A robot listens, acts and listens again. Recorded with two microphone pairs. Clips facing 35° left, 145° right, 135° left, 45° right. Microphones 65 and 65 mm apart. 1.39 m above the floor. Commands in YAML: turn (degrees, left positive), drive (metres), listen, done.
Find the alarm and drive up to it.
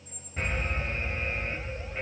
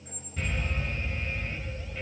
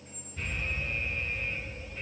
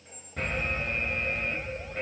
turn: -25
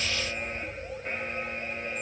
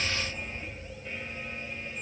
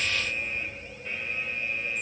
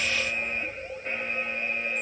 drive: 1.0
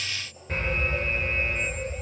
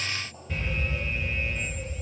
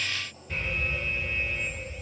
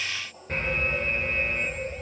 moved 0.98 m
drive: 1.0
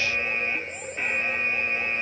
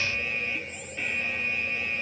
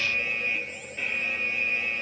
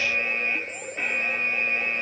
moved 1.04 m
turn: -10
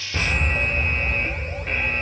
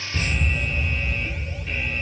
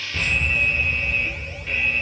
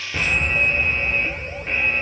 drive: 1.0
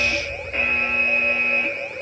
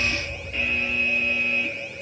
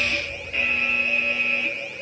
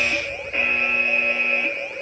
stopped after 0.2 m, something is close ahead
done: "I am next to the alarm."